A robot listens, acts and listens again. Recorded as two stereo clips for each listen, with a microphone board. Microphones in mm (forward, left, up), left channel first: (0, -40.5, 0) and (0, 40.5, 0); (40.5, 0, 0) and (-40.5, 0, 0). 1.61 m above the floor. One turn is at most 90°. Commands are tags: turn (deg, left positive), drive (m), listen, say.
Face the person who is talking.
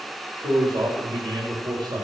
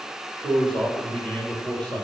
<turn deg="75"/>
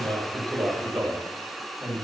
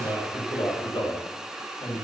<say>Found it: a man speaking, straight ahead, over 4 m away.</say>